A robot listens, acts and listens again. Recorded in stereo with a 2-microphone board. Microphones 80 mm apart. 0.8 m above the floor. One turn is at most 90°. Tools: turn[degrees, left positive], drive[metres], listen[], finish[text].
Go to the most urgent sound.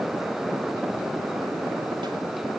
Action: listen[]
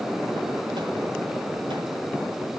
Action: listen[]
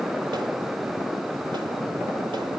Action: finish[I can't make out anything urgent to turn to.]